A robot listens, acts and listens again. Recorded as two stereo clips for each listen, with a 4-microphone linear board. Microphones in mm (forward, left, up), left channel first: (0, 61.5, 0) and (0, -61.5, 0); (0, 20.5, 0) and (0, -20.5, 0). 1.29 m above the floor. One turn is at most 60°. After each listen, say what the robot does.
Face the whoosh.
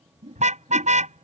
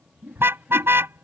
Turn 60° right.
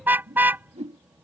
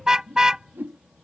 Turn 60° right.
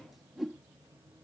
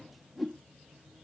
Facing the whoosh.